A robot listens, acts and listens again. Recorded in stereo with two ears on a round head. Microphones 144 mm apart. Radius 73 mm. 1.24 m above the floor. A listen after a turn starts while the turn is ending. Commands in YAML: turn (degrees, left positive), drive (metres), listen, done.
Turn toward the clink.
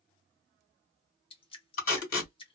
listen: true
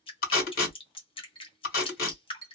turn: 30
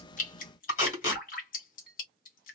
done: "Facing the clink."